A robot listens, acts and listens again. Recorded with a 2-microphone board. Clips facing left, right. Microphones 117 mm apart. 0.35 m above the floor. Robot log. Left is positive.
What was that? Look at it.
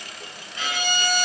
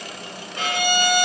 note: The violin: about 60° right or 120° right.
cmd yaw -60
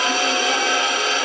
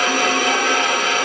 note: So it is at 60° right.
cmd yaw -60
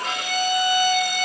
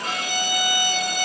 end: Facing the violin.